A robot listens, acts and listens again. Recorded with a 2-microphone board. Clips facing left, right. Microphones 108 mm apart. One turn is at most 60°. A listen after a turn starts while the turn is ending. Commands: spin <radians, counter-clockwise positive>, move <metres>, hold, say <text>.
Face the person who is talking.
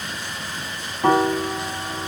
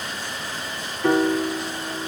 hold
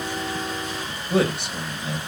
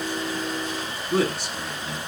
spin 1.05
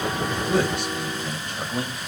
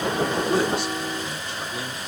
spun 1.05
spin 0.87
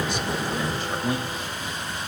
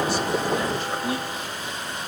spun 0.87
say Found it: a man speaking, straight ahead, 2 to 4 m away.